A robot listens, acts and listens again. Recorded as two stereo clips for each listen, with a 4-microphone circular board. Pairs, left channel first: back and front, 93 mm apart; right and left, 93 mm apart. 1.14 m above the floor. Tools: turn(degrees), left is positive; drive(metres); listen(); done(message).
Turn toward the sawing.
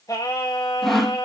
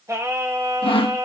turn(degrees=-90)
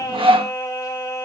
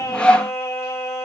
turn(degrees=-10)
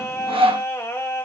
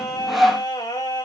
done("Found it: sawing, straight ahead, under 1 m away.")